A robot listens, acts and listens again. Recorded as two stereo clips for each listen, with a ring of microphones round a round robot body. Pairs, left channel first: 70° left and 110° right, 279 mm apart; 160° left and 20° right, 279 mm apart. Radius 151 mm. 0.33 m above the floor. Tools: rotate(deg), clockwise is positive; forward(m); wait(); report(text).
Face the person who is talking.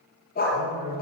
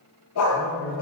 rotate(115)
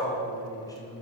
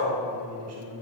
rotate(10)
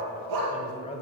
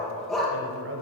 report("Found it: a man speaking, straight ahead, 1 to 2 m away.")